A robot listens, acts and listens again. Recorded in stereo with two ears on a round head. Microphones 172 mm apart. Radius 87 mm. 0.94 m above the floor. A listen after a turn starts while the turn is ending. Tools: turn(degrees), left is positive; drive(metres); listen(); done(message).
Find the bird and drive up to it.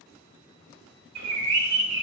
turn(degrees=-70)
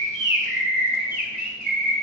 turn(degrees=-40)
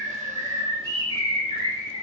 turn(degrees=-15)
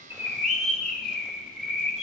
drive(metres=1.0)
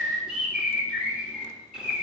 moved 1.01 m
drive(metres=1.0)
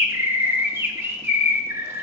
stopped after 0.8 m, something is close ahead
turn(degrees=-15)
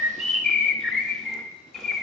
done("I am next to the bird.")